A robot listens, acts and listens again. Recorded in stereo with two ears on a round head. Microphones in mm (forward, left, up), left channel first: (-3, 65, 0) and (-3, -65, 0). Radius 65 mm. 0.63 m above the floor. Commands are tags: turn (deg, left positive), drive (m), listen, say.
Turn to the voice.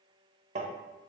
<listen/>
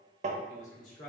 <turn deg="50"/>
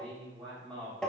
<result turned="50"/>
<turn deg="10"/>
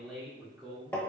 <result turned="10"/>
<say>Found it: a man speaking, straight ahead.</say>